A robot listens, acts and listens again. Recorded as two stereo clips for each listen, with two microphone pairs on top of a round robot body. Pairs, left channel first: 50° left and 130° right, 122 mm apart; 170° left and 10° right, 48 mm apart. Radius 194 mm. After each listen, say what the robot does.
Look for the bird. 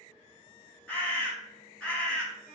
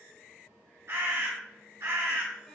Turn 30° right.
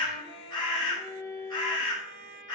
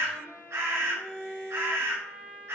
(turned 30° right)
Found it: a bird, straight ahead.